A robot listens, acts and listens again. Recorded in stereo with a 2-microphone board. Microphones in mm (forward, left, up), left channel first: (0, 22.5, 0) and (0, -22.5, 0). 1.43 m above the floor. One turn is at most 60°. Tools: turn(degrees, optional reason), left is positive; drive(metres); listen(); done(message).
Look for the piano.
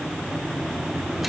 listen()
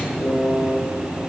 turn(degrees=60, reason="The piano: about 65° left or 115° left.")
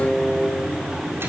turn(degrees=50, reason="So it is at 50° left.")
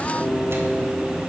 listen()
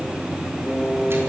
turn(degrees=10, reason="The piano is now 10° left.")
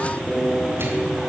done("Facing the piano.")